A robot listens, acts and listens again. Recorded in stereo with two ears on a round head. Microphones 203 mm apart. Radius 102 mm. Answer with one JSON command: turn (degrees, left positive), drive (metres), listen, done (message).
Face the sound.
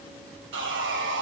{"turn": -50}
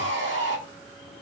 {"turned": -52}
{"turn": -65}
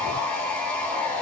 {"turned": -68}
{"done": "Found it: sawing, straight ahead, 1 to 2 m away."}